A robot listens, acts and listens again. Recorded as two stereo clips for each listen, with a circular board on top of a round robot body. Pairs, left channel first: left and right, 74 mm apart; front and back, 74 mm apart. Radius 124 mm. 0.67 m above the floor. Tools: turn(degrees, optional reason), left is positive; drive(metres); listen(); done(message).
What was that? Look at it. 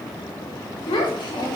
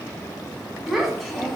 turn(degrees=85, reason="The child speaking: 85° left.")
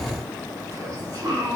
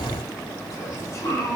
turn(degrees=-50, reason="The child speaking is now 50° right.")
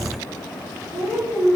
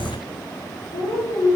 turn(degrees=-25, reason="The child speaking is now 25° right.")
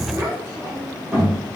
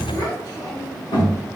turn(degrees=-15, reason="The child speaking is now 15° right.")
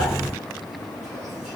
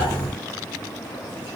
listen()
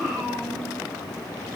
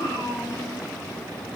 done("Found it: a child speaking, straight ahead.")